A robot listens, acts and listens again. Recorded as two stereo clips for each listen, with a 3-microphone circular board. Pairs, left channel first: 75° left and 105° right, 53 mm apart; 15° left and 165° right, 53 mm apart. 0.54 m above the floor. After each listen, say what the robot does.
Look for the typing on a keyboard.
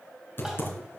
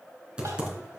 Turn 120° left.
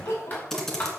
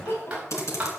Turn 10° right.
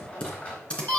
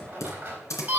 Facing the typing on a keyboard.